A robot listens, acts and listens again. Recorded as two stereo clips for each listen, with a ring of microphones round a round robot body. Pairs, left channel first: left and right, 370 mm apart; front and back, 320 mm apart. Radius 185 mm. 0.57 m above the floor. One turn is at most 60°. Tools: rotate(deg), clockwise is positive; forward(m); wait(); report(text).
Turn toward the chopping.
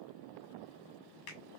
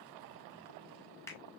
wait()
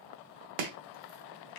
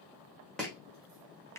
rotate(60)
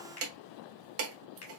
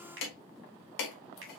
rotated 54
rotate(35)
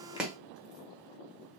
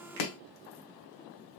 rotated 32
report("Facing the chopping.")